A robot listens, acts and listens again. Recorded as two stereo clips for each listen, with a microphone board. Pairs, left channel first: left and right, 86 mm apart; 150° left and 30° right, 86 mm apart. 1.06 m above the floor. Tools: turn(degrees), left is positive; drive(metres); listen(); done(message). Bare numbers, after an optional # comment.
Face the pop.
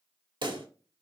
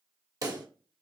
# The pop: 70° right.
turn(-70)
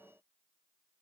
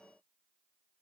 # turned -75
done("I heard a pop from this way, but can't make it out now.")